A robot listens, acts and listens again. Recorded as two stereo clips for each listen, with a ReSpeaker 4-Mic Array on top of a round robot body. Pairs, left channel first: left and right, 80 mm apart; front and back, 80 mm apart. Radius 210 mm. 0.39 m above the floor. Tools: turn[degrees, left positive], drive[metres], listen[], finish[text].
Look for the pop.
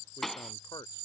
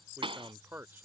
Thought: The pop: 175° left.
Action: turn[175]
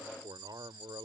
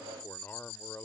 Action: finish[Facing where the pop came from. I can't hear it now.]